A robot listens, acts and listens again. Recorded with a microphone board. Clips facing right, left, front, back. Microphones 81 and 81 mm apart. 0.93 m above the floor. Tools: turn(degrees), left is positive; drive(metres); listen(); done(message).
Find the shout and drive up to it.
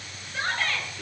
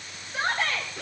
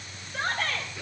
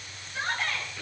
turn(degrees=30)
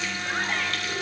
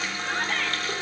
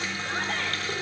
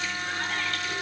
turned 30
listen()
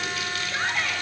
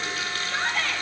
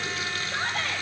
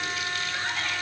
drive(metres=1.0)
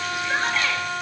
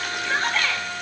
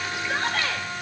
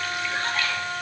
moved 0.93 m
listen()
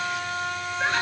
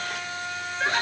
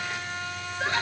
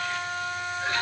listen()
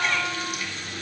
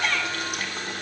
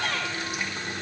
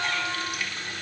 done("Facing where the shout came from. I can't hear it now. I did not reach it.")